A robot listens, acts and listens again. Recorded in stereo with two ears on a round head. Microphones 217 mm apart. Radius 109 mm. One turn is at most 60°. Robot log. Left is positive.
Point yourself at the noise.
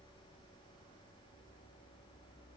cmd idle
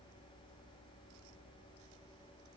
cmd idle
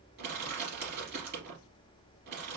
note: The crushing: about 45° right or 135° right.
cmd yaw -45
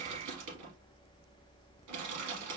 note: So it is at 85° right.
cmd yaw -60
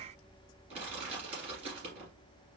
note: The crushing is now 25° right.
cmd yaw -25
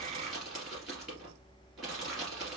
end: Facing the crushing.